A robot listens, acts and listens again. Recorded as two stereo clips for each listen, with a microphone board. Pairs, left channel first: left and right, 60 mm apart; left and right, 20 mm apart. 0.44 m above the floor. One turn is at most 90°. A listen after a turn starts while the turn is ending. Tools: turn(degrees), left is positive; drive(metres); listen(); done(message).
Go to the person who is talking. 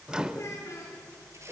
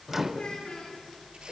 turn(degrees=50)
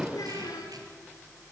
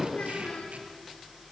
turn(degrees=80)
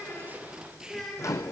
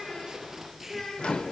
turn(degrees=10)
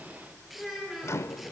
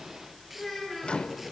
drive(metres=1.0)
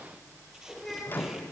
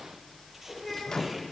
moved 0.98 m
drive(metres=1.0)
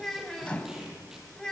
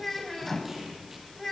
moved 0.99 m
turn(degrees=10)
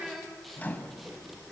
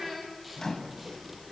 drive(metres=1.0)
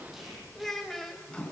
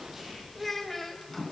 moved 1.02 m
drive(metres=1.0)
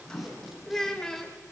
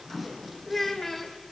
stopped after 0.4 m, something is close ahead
turn(degrees=10)
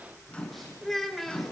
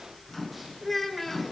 done("Arrived at the child speaking, straight ahead.")